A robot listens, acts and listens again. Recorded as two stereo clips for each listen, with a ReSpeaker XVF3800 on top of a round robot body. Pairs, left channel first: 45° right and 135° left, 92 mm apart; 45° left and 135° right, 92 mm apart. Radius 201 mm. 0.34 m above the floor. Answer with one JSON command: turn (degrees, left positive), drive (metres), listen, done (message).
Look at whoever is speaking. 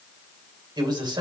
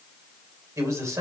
{"turn": 170}
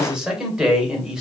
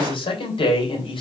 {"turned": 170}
{"turn": 50}
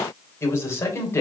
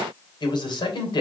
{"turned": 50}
{"turn": 15}
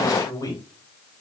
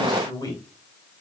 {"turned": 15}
{"done": "Facing the man speaking."}